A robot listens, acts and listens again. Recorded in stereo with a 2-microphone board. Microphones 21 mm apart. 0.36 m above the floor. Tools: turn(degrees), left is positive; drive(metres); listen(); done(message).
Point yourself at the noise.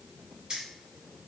turn(degrees=-45)
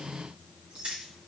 turn(degrees=-115)
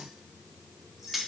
done("Facing the keys jangling.")